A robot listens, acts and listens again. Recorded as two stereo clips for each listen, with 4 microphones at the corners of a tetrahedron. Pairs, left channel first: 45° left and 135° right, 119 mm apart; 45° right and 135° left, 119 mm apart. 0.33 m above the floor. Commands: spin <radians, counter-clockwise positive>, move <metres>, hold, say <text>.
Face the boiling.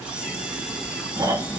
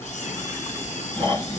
hold
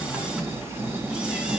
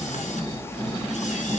hold
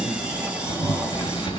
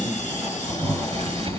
spin 1.66
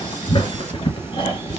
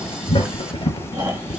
say Found it: boiling, straight ahead.